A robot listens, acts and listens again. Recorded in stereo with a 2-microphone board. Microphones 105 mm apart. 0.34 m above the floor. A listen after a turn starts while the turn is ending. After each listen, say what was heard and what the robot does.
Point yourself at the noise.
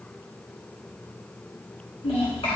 Turn 90° left.
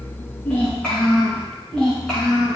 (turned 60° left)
Found it: a child speaking, straight ahead, 2 to 4 m away.